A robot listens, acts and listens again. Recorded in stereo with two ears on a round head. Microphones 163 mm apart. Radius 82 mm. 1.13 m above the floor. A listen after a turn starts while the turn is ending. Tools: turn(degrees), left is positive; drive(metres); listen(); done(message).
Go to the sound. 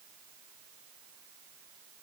listen()
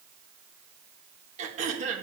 turn(degrees=-40)
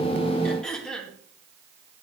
drive(metres=1.0)
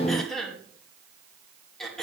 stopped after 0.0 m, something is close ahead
done("Blocked. The throat clearing is further on, straight ahead.")